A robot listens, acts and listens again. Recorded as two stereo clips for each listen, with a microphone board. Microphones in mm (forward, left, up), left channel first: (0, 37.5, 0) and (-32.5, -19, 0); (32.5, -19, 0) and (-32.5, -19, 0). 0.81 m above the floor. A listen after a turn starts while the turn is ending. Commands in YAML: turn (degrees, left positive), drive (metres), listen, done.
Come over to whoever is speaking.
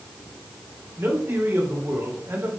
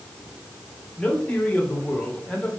turn: -75
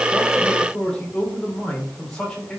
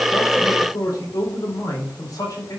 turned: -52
turn: -20
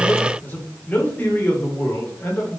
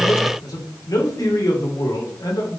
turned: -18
drive: 1.0
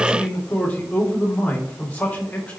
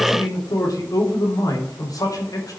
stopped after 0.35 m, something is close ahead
done: "Blocked. The man speaking is further on, straight ahead."